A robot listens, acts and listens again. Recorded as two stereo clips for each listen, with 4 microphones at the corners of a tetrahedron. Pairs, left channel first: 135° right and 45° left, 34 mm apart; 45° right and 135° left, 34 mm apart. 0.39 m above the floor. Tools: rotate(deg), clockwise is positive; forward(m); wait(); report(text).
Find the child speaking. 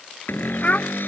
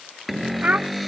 rotate(-180)
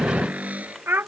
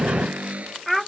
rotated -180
rotate(-45)
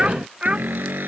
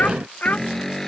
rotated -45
rotate(15)
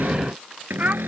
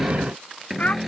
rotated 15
report("Found it: a child speaking, straight ahead.")